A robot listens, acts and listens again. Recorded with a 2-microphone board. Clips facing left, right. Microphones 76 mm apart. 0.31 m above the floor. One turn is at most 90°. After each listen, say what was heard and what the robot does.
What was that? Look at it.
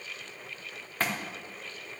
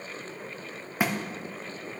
Turn 30° right.
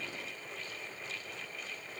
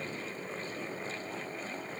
Keep listening.
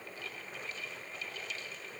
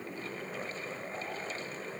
I heard a thud, but can't make it out now. It was about 20° left or 140° right.